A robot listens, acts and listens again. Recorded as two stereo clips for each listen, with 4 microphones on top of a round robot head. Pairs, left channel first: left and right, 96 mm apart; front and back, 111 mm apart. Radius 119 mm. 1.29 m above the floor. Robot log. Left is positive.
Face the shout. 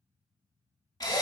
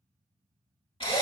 cmd idle
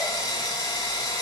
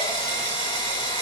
cmd idle
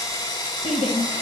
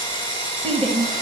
note: The shout: 75° left.
cmd yaw +75
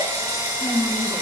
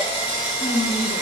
end: Found it: a shout, straight ahead.